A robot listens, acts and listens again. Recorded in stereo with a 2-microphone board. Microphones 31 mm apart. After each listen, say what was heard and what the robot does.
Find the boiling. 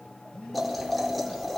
Turn 30° left.
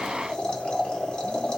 So it is at 150° left. Turn 150° left.
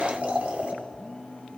The boiling is now 50° right. Turn 50° right.
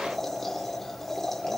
The boiling is now 10° left. Turn 10° left.
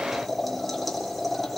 Found it: boiling, straight ahead.